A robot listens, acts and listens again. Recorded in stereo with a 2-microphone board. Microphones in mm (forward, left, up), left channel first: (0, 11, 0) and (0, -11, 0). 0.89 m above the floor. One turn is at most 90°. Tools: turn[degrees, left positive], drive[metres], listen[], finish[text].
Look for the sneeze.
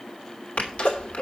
Action: turn[90]
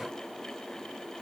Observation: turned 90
Action: finish[I heard a sneeze from this way, but can't make it out now.]